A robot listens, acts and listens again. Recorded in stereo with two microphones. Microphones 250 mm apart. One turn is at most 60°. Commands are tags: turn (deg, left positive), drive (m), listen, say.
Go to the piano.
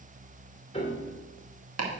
<turn deg="25"/>
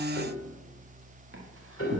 <turn deg="60"/>
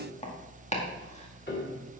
<turn deg="45"/>
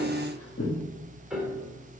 <drive m="1.0"/>
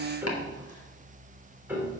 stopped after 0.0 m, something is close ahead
<say>Something is in my way. I am facing the piano but have not reached it.</say>